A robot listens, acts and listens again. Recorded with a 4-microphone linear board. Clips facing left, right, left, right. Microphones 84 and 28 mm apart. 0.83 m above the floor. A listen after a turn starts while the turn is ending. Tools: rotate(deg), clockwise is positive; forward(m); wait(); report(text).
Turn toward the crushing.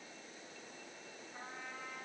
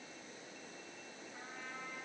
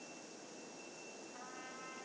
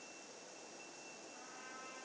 wait()
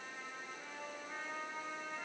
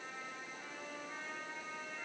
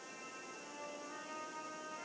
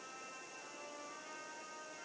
wait()
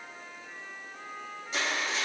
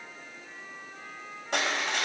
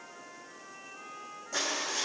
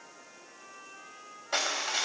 rotate(60)
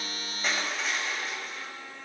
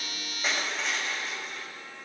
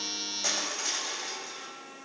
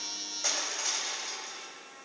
report("Facing the crushing, 2 to 4 m away.")